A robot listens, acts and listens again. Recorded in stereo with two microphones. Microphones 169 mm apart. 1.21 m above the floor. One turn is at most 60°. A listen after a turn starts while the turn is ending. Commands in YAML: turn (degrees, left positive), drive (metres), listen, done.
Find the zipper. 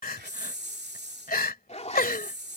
turn: 40
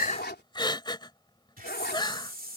turn: 60
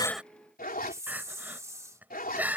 turn: 60
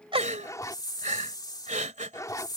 turn: 20
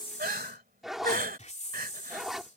done: "Found it: a zipper, straight ahead."